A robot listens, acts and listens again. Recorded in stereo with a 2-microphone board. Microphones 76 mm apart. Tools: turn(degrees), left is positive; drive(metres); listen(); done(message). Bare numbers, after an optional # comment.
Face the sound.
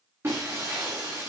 # The breaking glass: about 35° right or 145° right.
turn(-35)
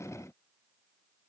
listen()
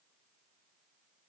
done("I heard breaking glass, but can't make it out now. It was about straight ahead or 110° right.")